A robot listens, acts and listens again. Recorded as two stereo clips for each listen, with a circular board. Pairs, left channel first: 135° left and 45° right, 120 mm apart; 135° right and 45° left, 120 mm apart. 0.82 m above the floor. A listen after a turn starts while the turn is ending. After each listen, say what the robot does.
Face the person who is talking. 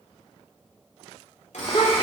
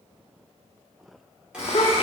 Turn 175° right.
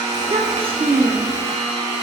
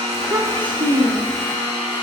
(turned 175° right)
Found it: a child speaking, straight ahead, under 1 m away.